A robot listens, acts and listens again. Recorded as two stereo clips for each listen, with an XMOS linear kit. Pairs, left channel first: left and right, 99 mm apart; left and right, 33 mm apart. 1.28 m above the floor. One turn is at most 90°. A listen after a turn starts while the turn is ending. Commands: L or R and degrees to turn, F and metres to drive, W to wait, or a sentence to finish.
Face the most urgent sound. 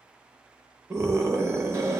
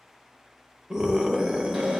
R30
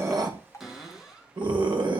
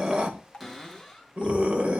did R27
R90
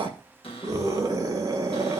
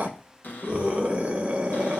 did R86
R35
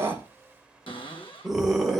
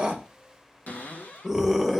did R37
Found it: a scream, straight ahead.